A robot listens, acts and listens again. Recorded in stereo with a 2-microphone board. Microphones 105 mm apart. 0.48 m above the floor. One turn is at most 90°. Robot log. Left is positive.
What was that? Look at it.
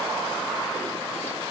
cmd idle
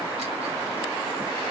cmd idle
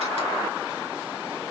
end: I can't make out anything to turn to.